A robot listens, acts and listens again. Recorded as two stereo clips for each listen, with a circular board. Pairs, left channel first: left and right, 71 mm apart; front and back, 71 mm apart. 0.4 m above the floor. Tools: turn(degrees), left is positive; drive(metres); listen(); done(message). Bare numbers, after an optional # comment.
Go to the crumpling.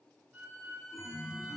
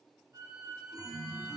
listen()
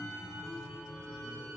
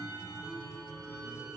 listen()
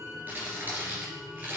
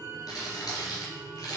# The crumpling: 25° right.
turn(-25)
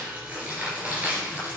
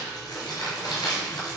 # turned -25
# The crumpling is now 20° right.
turn(-20)
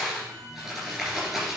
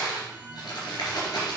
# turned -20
drive(1.0)
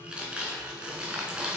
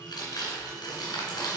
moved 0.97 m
# The crumpling is now 15° right.
turn(-15)
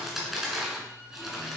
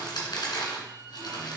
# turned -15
drive(1.0)
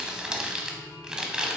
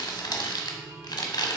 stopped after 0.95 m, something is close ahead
# The crumpling is now 10° right.
turn(-10)
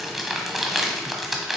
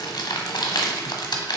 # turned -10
done("I am next to the crumpling.")